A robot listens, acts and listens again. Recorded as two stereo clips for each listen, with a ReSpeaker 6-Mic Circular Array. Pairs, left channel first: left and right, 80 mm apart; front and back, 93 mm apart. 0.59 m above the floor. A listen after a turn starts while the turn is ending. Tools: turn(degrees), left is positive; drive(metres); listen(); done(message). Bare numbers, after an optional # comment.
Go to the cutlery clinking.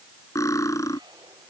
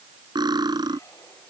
# The cutlery clinking: 140° left.
turn(140)
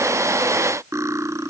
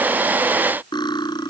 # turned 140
# The cutlery clinking is now 35° right.
turn(-35)
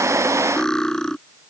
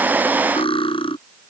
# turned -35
# The cutlery clinking is now 10° left.
turn(10)
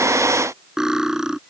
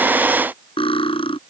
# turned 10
drive(1.0)
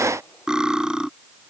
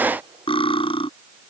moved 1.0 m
# The cutlery clinking is now 10° right.
turn(-10)
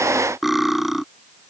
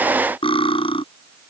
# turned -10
drive(1.0)
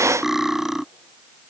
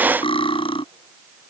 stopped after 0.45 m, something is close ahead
done("Something is in my way. I am facing the cutlery clinking but have not reached it.")